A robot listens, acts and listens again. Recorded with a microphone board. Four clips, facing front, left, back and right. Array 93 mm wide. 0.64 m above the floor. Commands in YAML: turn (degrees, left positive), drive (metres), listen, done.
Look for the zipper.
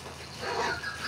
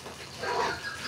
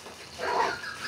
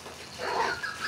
turn: -150
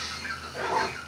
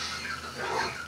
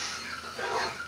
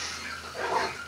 turn: -35
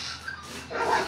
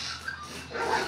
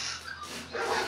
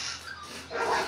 turn: -10
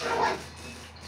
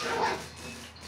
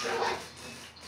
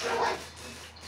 done: "Found it: a zipper, straight ahead, under 1 m away."